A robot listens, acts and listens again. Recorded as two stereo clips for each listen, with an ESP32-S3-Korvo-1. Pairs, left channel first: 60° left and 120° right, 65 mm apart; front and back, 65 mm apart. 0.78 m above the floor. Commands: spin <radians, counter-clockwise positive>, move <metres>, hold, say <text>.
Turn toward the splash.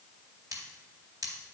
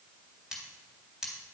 hold
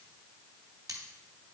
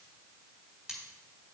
hold
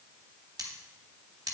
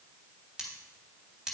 say I can't make out a splash, only cutlery clinking.